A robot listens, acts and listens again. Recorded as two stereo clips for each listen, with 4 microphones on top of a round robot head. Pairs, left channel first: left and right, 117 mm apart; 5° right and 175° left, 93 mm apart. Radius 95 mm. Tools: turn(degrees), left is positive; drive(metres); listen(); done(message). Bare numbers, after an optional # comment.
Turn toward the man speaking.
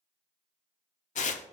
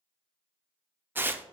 listen()
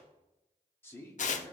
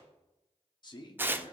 # The man speaking: 30° left.
turn(30)
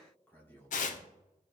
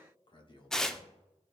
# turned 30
# The man speaking is now 20° left.
turn(20)
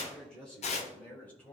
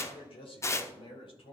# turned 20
# The man speaking is now 15° left.
turn(15)
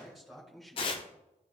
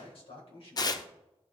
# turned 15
done("Found it: a man speaking, straight ahead, 2 to 4 m away.")